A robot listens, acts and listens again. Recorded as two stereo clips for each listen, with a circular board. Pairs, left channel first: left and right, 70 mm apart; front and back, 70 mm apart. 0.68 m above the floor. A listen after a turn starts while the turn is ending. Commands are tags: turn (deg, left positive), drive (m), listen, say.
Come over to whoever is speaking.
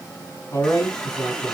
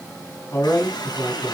<turn deg="50"/>
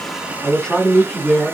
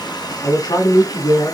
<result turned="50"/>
<turn deg="10"/>
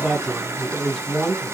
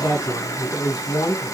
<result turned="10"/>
<drive m="1.0"/>
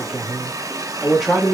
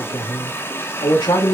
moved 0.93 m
<drive m="1.0"/>
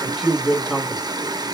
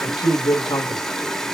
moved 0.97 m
<drive m="1.0"/>
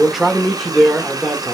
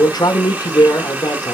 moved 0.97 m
<drive m="1.0"/>
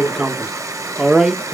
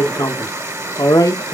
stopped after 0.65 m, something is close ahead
<turn deg="-10"/>
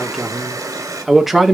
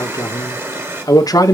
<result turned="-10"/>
<say>Arrived at the man speaking, straight ahead.</say>